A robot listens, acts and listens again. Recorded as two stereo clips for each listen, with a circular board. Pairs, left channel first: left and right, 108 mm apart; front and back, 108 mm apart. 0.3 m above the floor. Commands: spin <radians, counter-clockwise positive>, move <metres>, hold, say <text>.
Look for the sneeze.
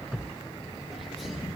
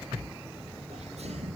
spin 3.05
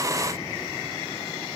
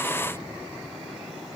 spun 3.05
say Facing where the sneeze came from. I can't hear it now.